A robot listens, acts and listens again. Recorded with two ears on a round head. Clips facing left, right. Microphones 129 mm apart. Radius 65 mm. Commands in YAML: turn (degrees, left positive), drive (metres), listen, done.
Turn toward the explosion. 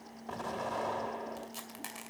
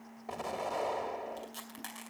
turn: -30
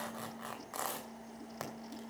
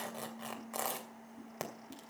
listen: true
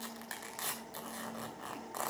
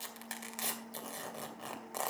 done: "I heard an explosion, but can't make it out now. It was about 20° left or 140° right."